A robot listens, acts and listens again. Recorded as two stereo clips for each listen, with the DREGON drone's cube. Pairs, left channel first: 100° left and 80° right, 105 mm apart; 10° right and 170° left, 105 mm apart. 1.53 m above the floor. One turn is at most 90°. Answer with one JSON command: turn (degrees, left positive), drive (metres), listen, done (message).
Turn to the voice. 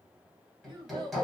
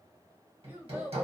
{"turn": -90}
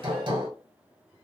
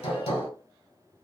{"turn": -30}
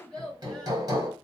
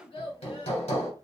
{"turn": 20}
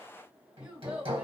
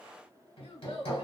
{"done": "Found it: a child speaking, straight ahead."}